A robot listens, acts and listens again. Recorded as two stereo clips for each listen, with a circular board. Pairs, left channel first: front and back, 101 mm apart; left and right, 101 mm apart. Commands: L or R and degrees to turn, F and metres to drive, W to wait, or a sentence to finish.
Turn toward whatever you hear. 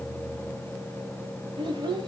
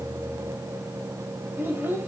R155
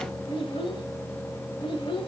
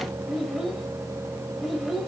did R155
Facing the child speaking.